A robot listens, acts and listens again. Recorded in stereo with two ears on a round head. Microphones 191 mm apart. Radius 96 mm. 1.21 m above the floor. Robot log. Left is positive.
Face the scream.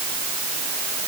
cmd idle
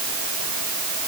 cmd idle
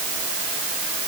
end: I can't make out a scream to turn to.